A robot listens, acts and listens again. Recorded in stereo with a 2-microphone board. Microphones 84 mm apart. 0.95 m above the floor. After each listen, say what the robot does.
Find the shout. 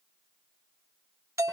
Keep listening.
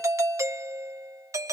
Keep listening.
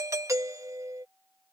I can't make out a shout, only a doorbell.